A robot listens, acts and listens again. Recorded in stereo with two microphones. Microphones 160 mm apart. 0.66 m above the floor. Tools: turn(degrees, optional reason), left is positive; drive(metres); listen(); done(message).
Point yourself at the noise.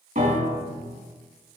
turn(degrees=-60, reason="The piano: about 60° right or 120° right.")
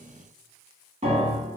turn(degrees=-50, reason="So it is at 50° right.")
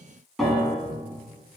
done("Found it: a piano, straight ahead.")